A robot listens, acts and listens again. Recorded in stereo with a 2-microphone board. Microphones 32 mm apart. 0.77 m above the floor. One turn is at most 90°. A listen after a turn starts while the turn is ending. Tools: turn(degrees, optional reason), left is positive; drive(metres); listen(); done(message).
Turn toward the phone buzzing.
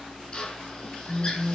turn(degrees=-30)
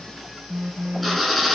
turn(degrees=-90, reason="So it is at 140° right.")
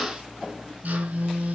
turn(degrees=-80, reason="The phone buzzing is now 80° right.")
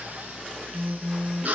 turn(degrees=-30, reason="The phone buzzing is now 30° right.")
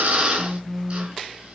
done("Found it: a phone buzzing, straight ahead, under 1 m away.")